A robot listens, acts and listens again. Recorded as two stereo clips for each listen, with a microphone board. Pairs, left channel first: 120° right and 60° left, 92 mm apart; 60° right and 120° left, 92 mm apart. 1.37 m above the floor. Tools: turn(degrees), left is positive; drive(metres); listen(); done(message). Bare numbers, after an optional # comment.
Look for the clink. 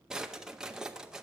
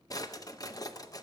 listen()
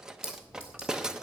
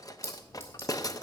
# The clink: 125° right.
turn(-125)
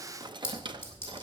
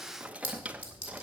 # The clink is now 60° right.
turn(-60)
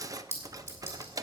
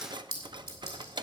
done("Facing the clink.")